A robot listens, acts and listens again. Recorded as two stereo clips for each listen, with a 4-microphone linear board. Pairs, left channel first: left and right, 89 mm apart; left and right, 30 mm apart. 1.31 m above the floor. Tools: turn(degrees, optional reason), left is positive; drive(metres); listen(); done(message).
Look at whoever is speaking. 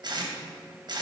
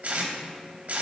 listen()
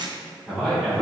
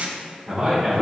turn(degrees=30)
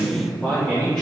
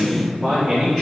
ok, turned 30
turn(degrees=30)
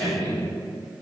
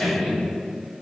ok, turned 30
turn(degrees=150, reason="So it is at 150° left.")
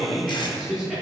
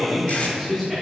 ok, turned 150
done("Found it: a man speaking, straight ahead, 2 to 4 m away.")